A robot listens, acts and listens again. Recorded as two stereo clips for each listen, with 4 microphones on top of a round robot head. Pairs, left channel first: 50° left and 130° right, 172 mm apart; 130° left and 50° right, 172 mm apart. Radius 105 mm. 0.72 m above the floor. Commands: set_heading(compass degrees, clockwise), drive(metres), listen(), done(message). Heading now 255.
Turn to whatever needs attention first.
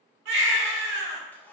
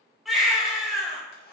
set_heading(35)
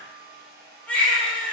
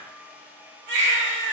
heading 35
set_heading(70)
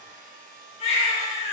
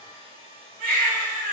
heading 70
set_heading(80)
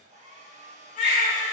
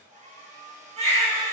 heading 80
done("Facing the baby crying, 2 to 4 m away.")